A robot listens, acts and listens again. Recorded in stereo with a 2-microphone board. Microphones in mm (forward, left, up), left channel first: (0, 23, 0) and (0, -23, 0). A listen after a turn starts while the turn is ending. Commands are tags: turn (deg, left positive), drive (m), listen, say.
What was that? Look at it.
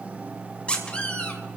<turn deg="25"/>
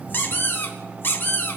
<turn deg="130"/>
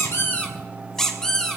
<turn deg="10"/>
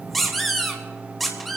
<say>Found it: a squeak, straight ahead.</say>